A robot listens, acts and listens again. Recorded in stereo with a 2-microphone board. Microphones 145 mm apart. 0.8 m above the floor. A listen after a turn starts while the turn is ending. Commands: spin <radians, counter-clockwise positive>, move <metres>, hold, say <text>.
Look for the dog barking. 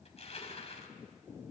hold
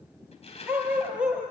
spin -0.52
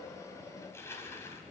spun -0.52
hold
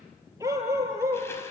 spin -0.35
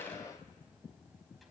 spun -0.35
hold
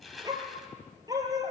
spin -2.71
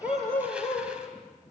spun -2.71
spin 0.35
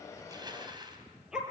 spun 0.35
say Found it: a dog barking, straight ahead, over 4 m away.